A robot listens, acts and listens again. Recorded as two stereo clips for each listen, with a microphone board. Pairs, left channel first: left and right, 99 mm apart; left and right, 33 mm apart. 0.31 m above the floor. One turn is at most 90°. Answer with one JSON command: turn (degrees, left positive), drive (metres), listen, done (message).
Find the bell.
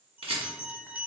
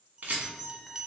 {"turn": -20}
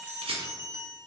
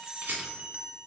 {"turn": -90}
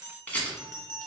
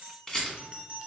{"turn": -45}
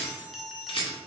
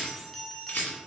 {"done": "Found it: a bell, straight ahead."}